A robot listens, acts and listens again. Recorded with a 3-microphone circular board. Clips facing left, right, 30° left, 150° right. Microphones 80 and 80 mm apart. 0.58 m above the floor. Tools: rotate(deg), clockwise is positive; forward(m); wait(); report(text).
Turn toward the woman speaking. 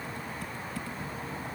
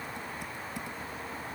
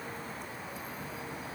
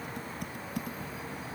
wait()
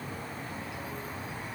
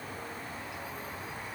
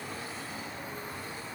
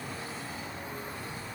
wait()
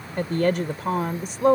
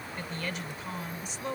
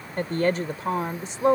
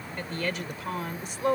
rotate(-90)
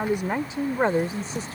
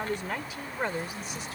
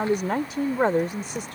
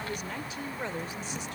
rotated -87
rotate(-40)
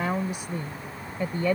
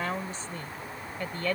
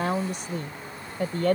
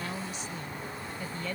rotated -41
rotate(-15)
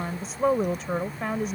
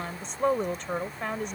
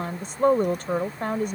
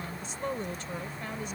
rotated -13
report("Found it: a woman speaking, straight ahead.")